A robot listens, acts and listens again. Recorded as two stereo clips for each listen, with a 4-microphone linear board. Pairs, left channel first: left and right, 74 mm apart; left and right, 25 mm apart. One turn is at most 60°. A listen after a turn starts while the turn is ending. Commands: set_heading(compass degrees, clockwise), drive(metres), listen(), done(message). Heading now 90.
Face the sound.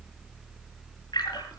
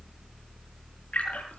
set_heading(30)
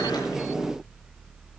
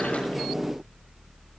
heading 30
listen()
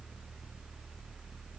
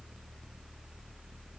done("I heard a splash, but can't make it out now. It was about 15° left or 45° left.")